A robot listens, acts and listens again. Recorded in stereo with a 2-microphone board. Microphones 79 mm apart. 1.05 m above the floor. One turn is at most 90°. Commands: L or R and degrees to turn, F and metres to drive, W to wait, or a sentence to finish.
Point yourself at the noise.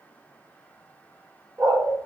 R45
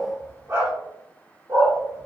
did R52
R55
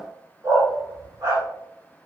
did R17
R55
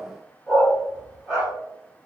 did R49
R10
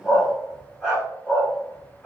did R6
Facing the dog barking.